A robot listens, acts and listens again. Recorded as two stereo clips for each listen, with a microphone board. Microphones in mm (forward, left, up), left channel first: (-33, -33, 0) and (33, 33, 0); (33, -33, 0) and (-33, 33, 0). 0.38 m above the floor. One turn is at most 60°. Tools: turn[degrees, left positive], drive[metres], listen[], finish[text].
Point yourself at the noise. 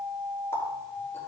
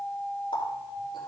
Thought: The running tap: 75° right.
Action: turn[-60]
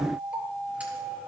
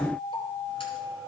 Thought: Nothing new. It was at 15° right.
Action: turn[-15]
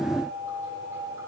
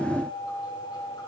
Action: listen[]
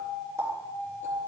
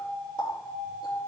Thought: The running tap is now 15° right.
Action: turn[-15]
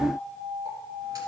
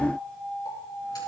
Action: listen[]
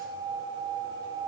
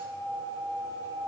Action: listen[]
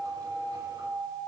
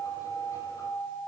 Action: finish[Facing where the running tap came from. I can't hear it now.]